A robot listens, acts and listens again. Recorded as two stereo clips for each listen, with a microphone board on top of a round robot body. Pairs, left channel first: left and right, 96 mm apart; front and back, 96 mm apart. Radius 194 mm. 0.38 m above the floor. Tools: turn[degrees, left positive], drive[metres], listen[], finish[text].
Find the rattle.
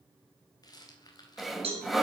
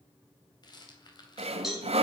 Thought: The rattle: 45° left.
Action: turn[45]
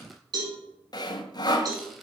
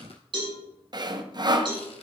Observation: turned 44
Action: listen[]
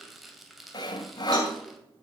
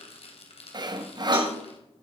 Action: finish[Found it: a rattle, straight ahead.]